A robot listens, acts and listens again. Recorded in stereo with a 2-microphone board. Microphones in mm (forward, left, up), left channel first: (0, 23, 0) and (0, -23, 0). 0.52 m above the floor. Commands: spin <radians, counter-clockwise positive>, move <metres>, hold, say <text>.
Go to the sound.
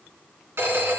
spin -1.22
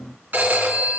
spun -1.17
spin -0.79
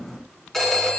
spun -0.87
move 1.0
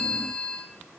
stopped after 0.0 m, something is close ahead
spin 0.17
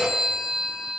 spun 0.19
say Something is in my way. I am facing the phone ringing but have not reached it.